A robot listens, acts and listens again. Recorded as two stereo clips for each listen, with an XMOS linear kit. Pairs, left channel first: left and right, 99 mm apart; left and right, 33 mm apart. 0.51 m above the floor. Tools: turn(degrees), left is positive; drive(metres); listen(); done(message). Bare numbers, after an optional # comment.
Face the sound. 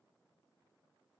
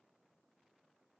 listen()
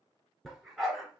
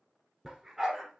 turn(-30)
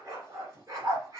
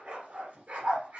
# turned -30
# So it is at 145° right.
turn(-145)
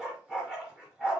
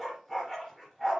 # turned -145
# The dog barking is now 10° right.
turn(-10)
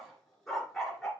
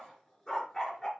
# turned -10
done("Found it: a dog barking, straight ahead, 2 to 4 m away.")